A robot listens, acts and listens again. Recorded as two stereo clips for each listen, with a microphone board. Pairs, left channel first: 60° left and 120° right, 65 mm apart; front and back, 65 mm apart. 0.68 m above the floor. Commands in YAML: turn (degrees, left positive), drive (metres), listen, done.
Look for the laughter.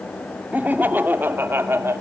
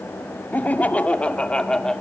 turn: -80
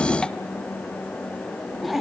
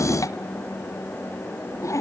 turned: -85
turn: -35
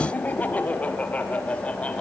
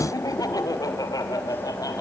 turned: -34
turn: -10
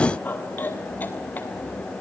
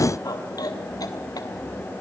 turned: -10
done: "Found it: laughter, straight ahead, 2 to 4 m away."